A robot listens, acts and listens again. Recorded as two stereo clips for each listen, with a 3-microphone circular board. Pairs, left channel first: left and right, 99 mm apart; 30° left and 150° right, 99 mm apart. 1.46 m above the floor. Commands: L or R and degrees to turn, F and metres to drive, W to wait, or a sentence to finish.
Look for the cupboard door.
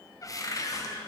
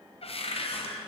L40
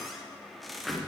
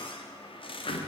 Found it: a cupboard door, straight ahead, under 1 m away.